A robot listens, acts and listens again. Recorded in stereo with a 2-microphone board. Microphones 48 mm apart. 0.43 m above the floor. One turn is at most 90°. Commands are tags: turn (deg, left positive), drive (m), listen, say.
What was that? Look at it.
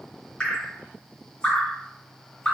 <turn deg="20"/>
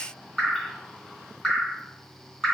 <say>Facing the dripping, 1 to 2 m away.</say>